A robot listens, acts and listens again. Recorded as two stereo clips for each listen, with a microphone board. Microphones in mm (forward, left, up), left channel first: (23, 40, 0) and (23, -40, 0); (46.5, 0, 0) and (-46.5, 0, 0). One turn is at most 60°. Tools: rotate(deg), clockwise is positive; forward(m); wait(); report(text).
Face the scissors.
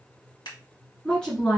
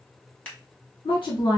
rotate(-60)
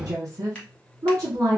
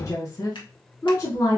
rotate(-10)
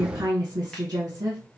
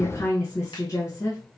wait()
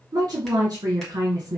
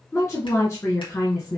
report("I heard scissors from this way, but can't make it out now.")